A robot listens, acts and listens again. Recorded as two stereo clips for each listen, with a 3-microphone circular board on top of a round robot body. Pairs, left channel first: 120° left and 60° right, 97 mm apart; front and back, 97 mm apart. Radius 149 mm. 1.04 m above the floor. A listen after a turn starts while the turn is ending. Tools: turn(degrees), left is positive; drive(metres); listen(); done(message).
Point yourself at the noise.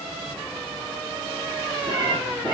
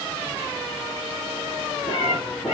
turn(degrees=-20)
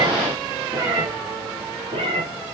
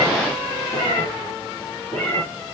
turn(degrees=-65)
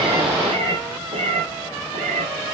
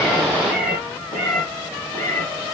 turn(degrees=-55)
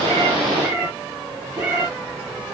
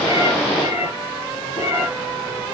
done("Facing the cat meowing.")